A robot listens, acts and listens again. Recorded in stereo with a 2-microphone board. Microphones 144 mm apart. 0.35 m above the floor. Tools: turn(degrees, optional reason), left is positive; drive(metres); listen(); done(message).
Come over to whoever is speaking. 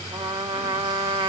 listen()
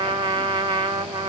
listen()
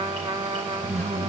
turn(degrees=-50, reason="The man speaking: about 50° right or 130° right.")
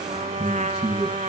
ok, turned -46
drive(metres=1.0)
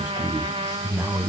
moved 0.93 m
drive(metres=1.0)
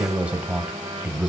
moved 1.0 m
turn(degrees=-10, reason="The man speaking is now 10° right.")
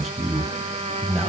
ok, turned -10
drive(metres=1.0)
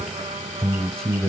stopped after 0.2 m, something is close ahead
done("Arrived at the man speaking, straight ahead.")